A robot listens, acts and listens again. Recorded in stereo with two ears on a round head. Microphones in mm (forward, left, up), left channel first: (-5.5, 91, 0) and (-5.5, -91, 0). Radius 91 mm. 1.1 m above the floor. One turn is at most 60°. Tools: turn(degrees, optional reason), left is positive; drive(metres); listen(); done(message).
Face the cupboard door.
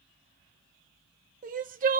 listen()
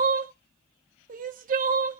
listen()
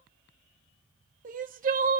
done("I can't make out a cupboard door, only crying.")